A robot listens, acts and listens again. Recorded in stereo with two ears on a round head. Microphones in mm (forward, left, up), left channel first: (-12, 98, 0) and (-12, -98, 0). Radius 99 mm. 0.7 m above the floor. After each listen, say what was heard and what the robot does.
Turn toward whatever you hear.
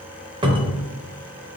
The cupboard door: about 20° right or 160° right. Turn 20° right.
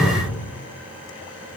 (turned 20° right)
So it is at 135° right. Turn 135° right.
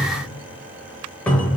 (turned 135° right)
Facing the cupboard door.